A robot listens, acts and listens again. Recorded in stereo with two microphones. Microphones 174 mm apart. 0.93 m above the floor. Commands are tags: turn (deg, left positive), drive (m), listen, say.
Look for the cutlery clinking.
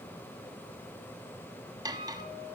<turn deg="-20"/>
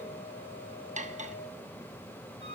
<turn deg="-140"/>
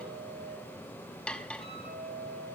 <say>Found it: cutlery clinking, straight ahead, under 1 m away.</say>